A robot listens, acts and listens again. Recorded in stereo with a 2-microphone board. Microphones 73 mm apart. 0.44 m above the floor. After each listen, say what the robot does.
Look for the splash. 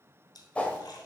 Turn 65° left.
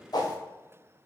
Keep listening.
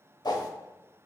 I heard a splash, but can't make it out now. It was about straight ahead or 50° left.